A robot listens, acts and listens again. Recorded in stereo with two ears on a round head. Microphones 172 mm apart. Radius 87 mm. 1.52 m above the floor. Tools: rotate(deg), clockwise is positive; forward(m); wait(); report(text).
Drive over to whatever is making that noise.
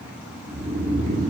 rotate(45)
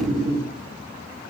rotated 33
rotate(100)
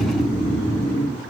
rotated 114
rotate(-10)
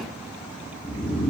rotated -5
forward(1.0)
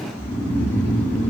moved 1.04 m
rotate(-10)
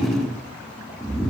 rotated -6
forward(1.0)
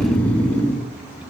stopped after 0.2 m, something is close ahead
rotate(-10)
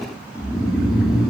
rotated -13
report("I am next to the snoring.")